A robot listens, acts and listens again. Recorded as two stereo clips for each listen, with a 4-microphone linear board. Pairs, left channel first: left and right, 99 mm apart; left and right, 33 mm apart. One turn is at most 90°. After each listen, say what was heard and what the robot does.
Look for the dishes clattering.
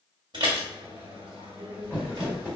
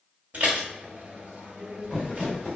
The dishes clattering: about 50° right or 130° right. Turn 50° right.
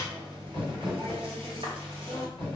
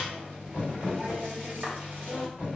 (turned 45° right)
So it is at 80° right. Turn 80° right.
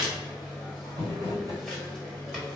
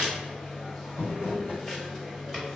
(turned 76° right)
Found it: dishes clattering, straight ahead.